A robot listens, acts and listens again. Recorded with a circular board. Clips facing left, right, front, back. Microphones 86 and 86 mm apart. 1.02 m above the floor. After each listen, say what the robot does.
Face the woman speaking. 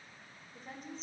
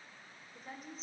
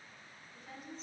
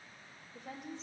Turn 175° right.
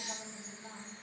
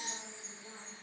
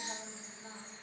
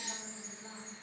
Turn 75° left.
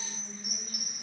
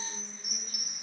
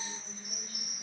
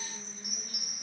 Keep listening.
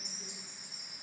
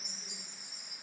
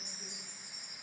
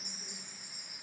Keep listening.
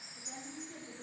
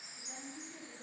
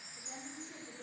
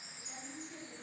Turn 55° left.
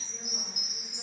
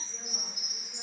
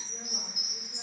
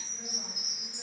Keep listening.
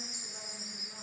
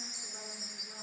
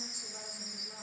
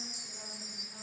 Keep listening.
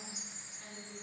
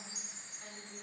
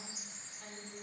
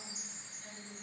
I heard a woman speaking from this way, but can't make it out now.